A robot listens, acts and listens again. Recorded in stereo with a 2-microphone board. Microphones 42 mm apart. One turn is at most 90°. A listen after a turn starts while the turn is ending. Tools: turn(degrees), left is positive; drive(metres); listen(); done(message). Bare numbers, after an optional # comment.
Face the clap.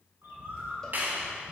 # The clap: about 45° right or 135° right.
turn(-45)
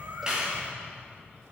listen()
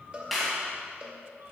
done("Found it: a clap, straight ahead, 2 to 4 m away.")